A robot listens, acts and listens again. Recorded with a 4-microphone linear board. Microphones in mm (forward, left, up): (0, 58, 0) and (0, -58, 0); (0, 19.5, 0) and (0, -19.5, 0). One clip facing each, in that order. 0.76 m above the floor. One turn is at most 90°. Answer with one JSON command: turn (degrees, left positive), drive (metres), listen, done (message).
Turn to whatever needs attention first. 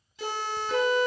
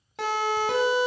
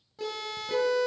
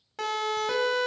{"turn": -90}
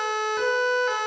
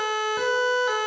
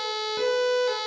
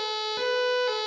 {"turn": -10}
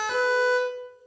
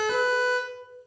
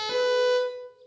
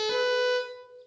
{"done": "Found it: a siren, straight ahead, 2 to 4 m away."}